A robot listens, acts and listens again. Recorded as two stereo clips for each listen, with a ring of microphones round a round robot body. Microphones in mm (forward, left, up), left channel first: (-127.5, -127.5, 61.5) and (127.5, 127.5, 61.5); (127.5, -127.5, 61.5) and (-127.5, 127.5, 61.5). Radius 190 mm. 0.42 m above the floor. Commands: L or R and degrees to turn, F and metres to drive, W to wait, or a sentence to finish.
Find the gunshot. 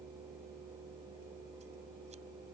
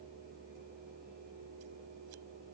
W
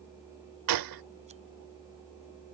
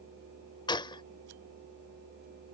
L30
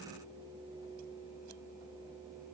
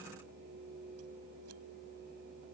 Facing where the gunshot came from. I can't hear it now.